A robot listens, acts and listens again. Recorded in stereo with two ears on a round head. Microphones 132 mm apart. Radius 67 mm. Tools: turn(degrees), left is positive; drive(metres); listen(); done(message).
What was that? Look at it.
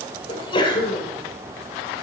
turn(degrees=35)
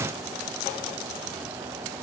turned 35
listen()
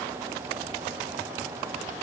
done("I heard a sneeze, but can't make it out now. It was about straight ahead or 110° left.")